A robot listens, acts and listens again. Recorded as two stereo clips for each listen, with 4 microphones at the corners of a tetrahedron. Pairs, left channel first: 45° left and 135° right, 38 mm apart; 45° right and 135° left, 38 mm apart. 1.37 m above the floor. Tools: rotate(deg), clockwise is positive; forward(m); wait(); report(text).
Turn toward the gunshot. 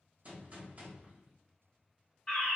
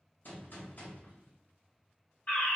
rotate(85)
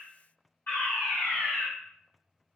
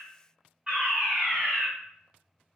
report("Facing where the gunshot came from. I can't hear it now.")